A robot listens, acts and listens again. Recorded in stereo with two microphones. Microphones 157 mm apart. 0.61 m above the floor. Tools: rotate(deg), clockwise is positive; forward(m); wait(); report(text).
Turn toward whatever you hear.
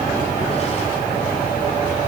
wait()
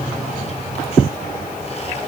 wait()
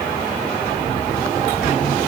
report("I can't make out anything.")